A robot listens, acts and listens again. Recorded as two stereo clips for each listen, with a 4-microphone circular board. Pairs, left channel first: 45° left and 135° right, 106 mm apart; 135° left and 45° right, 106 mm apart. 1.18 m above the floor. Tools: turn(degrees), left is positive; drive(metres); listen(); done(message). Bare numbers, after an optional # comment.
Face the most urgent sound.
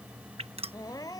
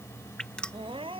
# The crying: 10° right.
turn(-10)
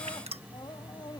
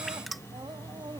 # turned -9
listen()
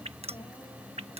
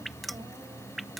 listen()
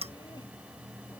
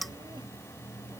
done("Facing where the crying came from. I can't hear it now.")